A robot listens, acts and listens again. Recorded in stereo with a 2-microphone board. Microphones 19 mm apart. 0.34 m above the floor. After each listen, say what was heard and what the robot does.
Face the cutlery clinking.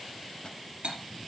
Turn 90° right.
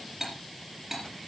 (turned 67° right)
So it is at 25° right. Turn 25° right.
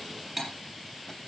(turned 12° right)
The cutlery clinking is now 15° right. Turn 15° right.
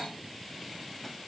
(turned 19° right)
Keep listening.
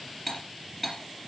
Facing the cutlery clinking.